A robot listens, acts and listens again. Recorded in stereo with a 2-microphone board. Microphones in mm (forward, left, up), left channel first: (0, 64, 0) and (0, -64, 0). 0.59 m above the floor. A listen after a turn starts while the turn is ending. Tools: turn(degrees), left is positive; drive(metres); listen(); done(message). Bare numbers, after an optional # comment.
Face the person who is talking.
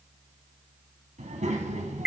# The child speaking: about 65° right or 115° right.
turn(-65)
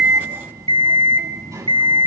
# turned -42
# So it is at 25° right.
turn(-25)
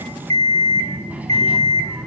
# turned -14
# The child speaking is now 15° right.
turn(-15)
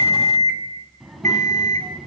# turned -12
done("Found it: a child speaking, straight ahead, 2 to 4 m away.")